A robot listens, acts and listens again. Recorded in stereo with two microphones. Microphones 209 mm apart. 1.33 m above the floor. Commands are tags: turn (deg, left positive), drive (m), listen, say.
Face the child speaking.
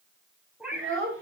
<turn deg="-75"/>
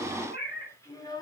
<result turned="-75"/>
<turn deg="20"/>
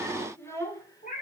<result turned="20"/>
<turn deg="15"/>
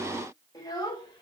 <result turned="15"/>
<turn deg="20"/>
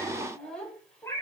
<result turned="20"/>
<say>Found it: a child speaking, straight ahead, 2 to 4 m away.</say>